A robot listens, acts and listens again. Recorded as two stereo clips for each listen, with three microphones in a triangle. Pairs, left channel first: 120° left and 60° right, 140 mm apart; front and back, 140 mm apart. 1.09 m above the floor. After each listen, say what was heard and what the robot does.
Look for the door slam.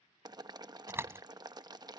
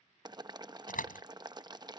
The door slam: 15° left. Turn 15° left.
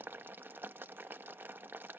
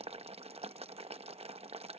I heard a door slam from this way, but can't make it out now.